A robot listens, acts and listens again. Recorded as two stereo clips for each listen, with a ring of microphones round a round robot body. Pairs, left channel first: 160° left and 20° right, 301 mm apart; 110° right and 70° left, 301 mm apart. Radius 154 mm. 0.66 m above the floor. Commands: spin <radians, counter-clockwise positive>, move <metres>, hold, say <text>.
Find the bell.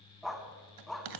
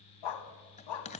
spin -0.79
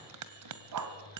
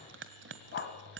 spin 0.26
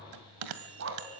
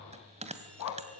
say Facing the bell.